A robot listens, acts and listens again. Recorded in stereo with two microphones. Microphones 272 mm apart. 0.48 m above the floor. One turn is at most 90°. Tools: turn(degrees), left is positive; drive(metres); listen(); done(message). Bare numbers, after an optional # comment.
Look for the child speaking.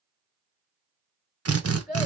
turn(30)
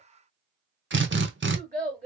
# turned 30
# So it is at 25° right.
turn(-25)
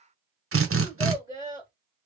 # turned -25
# The child speaking is now 15° right.
turn(-15)
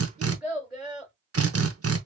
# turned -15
done("Found it: a child speaking, straight ahead.")